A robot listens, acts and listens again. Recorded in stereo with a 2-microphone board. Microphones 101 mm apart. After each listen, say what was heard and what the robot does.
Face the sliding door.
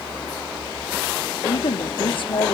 Keep listening.
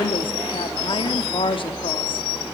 Keep listening.
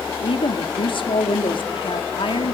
I can't make out a sliding door to turn to.